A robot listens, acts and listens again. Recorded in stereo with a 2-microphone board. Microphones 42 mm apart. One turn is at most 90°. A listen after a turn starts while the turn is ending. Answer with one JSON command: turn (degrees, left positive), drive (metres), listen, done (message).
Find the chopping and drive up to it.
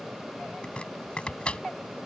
{"turn": 25}
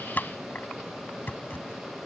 {"turn": 90}
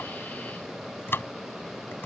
{"turn": 65}
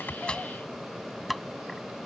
{"drive": 1.0}
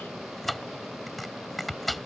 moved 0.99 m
{"drive": 1.0}
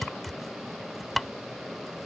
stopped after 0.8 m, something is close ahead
{"done": "I am next to the chopping."}